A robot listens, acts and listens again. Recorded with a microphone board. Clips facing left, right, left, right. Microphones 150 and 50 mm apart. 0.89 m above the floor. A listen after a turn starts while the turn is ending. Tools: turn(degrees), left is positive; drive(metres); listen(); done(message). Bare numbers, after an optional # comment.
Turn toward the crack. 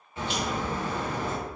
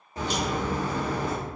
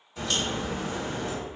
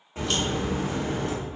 # The crack: about 35° right or 145° right.
turn(-35)
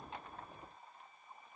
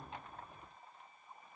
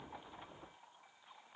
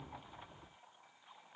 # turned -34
listen()
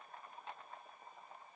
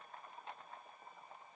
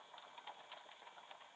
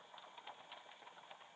done("I heard a crack, but can't make it out now. It was about straight ahead or 110° right.")